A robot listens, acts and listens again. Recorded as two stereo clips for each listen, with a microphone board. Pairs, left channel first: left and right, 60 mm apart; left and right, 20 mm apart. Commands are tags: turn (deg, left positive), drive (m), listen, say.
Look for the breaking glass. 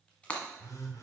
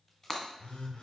<turn deg="25"/>
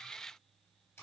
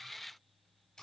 <listen/>
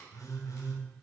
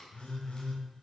<say>I heard breaking glass, but can't make it out now. It was about straight ahead or 130° left.</say>